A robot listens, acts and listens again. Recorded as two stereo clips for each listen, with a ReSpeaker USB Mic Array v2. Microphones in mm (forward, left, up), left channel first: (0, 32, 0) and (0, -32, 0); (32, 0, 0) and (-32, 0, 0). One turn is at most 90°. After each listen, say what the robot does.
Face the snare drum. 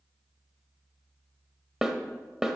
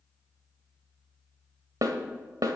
Turn 90° right.
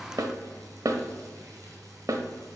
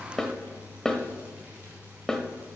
Turn 80° right.
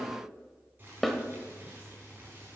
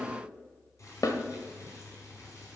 Facing the snare drum, 1 to 2 m away.